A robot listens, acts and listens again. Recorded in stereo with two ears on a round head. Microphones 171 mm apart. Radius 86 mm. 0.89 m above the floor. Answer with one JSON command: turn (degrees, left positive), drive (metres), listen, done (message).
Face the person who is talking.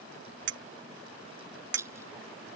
{"listen": true}
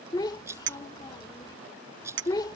{"turn": 20}
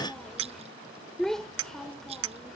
{"done": "Facing the child speaking."}